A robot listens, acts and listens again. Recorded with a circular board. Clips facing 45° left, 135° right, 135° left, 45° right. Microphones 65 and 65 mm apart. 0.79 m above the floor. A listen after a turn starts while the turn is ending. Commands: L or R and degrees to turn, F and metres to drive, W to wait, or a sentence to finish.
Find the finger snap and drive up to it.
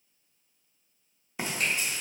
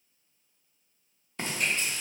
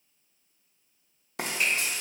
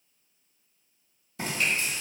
L60
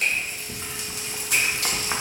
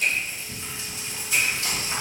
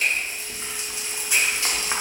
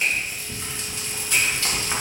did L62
W
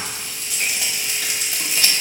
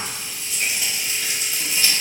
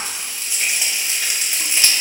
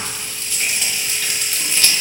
W
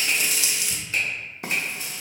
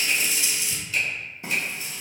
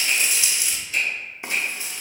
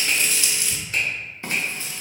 F1.0
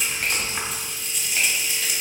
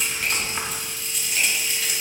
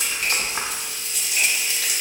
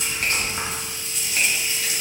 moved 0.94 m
W
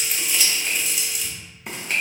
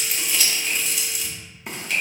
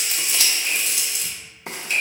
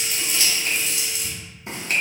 F1.0
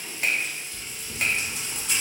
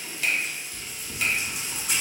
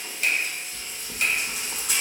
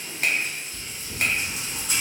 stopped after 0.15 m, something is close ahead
Arrived at the finger snap, straight ahead.